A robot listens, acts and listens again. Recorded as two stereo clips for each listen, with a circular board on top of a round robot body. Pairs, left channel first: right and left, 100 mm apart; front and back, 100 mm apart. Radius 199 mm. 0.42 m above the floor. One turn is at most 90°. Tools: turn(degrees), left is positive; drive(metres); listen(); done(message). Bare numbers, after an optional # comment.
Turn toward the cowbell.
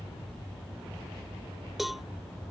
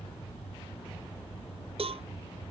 # The cowbell: straight behind.
turn(90)
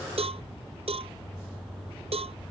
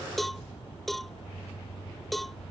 # The cowbell is now 90° left.
turn(90)
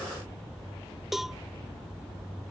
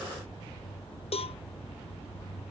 done("Facing the cowbell.")